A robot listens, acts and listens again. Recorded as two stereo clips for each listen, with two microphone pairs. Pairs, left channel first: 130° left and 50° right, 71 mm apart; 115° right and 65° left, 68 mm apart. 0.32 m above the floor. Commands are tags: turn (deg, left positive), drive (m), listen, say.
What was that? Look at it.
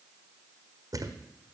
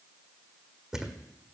<turn deg="-15"/>
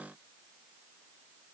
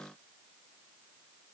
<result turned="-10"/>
<say>I heard a thud from this way, but can't make it out now.</say>